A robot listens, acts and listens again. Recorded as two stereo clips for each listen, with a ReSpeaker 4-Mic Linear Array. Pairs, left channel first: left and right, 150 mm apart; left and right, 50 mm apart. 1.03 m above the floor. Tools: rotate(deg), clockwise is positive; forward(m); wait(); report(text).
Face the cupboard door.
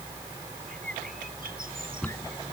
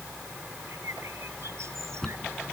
rotate(-30)
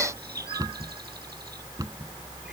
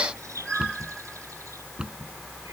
rotate(20)
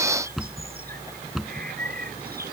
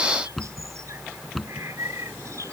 report("Facing the cupboard door.")